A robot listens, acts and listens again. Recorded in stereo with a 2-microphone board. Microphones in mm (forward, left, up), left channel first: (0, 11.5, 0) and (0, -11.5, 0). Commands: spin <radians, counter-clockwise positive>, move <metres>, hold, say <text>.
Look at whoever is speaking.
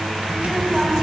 spin -0.52
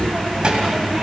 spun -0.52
spin -2.44
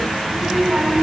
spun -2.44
spin -0.79
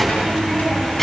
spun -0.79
spin 0.17
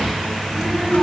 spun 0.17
say Facing the child speaking.